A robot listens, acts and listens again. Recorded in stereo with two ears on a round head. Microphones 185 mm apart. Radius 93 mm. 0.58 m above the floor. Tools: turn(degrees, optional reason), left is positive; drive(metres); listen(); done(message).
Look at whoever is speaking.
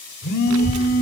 turn(degrees=-90)
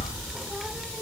done("Found it: a child speaking, straight ahead.")